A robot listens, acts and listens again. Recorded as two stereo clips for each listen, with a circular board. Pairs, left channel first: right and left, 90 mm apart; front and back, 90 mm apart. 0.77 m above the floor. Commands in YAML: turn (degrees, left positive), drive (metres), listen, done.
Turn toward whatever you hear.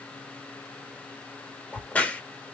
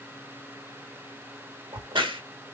turn: -165
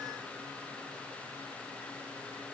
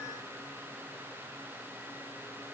done: "Facing where the crack came from. I can't hear it now."